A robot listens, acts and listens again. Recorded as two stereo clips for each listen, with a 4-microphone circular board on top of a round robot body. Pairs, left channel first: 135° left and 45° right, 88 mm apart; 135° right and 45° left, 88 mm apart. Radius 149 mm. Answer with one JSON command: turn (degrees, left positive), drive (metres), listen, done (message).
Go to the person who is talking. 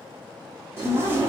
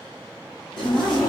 {"turn": 140}
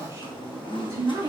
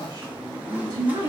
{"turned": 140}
{"drive": 1.0}
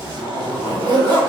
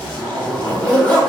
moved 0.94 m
{"listen": true}
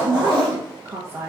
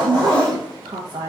{"turn": 15}
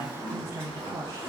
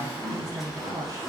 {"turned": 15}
{"drive": 1.0}
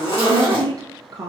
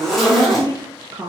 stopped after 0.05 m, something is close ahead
{"done": "I am next to the woman speaking."}